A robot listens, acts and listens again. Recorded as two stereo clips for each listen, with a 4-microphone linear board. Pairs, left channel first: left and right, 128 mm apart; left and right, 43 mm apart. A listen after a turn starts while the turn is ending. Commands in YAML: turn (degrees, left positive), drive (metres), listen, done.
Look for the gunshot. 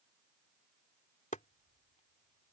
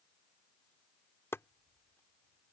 listen: true
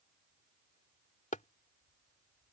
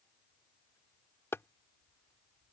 listen: true
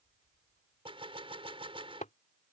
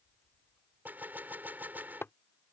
turn: -45
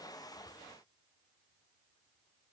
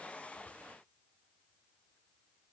listen: true
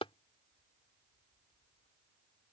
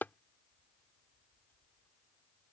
done: "I heard a gunshot, but can't make it out now. It was about straight ahead or 90° right."